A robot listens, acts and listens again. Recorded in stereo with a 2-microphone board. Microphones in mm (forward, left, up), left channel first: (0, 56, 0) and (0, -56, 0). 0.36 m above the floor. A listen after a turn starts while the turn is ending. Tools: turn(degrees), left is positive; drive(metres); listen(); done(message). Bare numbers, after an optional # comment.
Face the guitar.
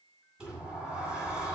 listen()
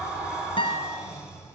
# The guitar: about 45° left or 135° left.
turn(45)
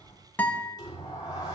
# So it is at 10° left.
turn(10)
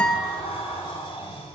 listen()
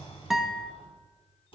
done("Facing the guitar, under 1 m away.")